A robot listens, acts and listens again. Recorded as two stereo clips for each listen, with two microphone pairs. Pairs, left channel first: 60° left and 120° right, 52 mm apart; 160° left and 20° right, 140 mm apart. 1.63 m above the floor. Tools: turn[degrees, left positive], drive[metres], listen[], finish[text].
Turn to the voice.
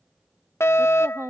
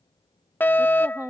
Thought: The woman speaking: 95° right.
Action: turn[-95]
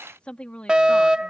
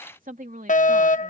Action: finish[Facing the woman speaking.]